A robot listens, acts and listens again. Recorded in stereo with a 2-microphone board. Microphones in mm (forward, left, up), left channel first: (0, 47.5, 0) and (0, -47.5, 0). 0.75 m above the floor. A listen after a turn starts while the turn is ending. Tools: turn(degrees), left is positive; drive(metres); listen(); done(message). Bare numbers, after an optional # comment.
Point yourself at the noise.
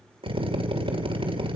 # The drill: about 65° right or 115° right.
turn(-65)
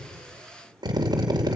# So it is at 45° right.
turn(-45)
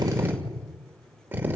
# The drill is now 20° right.
turn(-20)
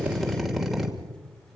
done("Facing the drill.")